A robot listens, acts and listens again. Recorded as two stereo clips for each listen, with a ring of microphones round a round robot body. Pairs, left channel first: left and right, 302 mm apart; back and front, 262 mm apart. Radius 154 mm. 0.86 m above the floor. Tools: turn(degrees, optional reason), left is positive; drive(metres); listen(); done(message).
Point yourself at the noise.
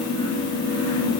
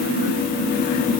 listen()
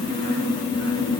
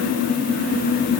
listen()
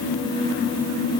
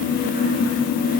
done("I can't make out anything to turn to.")